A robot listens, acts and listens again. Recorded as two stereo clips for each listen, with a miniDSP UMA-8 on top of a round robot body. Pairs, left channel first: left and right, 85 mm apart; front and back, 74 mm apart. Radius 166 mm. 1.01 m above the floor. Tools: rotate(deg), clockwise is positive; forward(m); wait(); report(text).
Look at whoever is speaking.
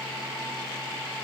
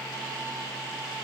wait()
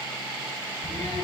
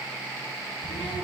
rotate(-15)
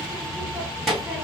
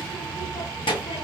report("Found it: a child speaking, straight ahead.")